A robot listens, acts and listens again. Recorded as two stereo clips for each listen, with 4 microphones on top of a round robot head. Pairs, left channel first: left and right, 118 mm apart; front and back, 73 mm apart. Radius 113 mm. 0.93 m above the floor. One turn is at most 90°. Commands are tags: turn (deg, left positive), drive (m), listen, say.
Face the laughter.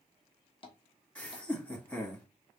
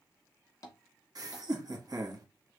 <turn deg="90"/>
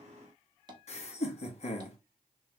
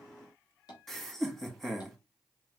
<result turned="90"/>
<turn deg="85"/>
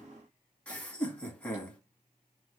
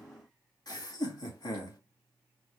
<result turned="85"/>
<turn deg="15"/>
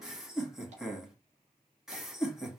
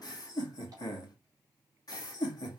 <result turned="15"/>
<say>Found it: laughter, straight ahead, 1 to 2 m away.</say>